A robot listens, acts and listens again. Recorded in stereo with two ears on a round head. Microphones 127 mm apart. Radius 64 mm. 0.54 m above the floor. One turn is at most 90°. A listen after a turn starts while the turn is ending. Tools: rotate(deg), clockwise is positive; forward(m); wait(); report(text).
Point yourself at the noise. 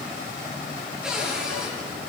rotate(30)
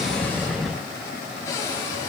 rotate(-25)
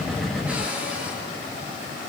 rotate(10)
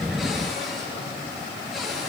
report("Facing the cupboard door, over 4 m away.")